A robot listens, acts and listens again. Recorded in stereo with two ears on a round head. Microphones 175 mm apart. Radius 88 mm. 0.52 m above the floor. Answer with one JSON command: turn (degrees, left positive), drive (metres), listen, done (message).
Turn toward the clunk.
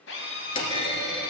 {"turn": 25}
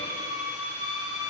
{"listen": true}
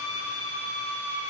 {"done": "I heard a clunk, but can't make it out now. It was about straight ahead or 130° left."}